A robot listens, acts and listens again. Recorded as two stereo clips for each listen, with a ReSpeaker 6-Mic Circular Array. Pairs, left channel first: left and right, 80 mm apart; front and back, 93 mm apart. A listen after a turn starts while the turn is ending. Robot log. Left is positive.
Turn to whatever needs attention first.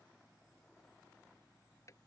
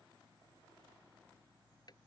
cmd idle
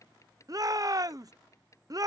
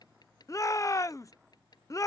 note: The shout: 50° right.
cmd yaw -50
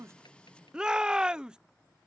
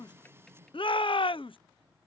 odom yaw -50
note: The shout is now 10° right.
cmd yaw -10
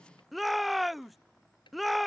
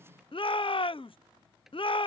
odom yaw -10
end: Found it: a shout, straight ahead.